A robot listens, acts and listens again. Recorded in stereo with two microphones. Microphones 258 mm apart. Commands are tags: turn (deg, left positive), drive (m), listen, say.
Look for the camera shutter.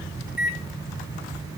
<listen/>
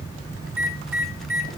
<listen/>
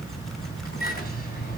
<say>I can't make out a camera shutter to turn to.</say>